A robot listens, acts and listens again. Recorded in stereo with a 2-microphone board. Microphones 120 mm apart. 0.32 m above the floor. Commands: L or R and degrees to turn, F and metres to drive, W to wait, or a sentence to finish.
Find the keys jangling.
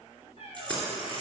L30
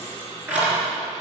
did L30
R10
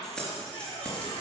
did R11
L10
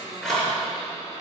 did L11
Facing the keys jangling.